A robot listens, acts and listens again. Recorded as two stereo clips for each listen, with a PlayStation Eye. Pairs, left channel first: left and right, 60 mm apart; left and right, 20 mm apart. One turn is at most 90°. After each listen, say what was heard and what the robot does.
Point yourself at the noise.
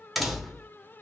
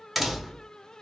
Turn 30° left.
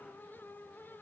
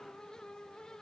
Keep listening.
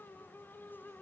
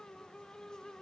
I heard a door slam, but can't make it out now. It was about 30° right or 150° left.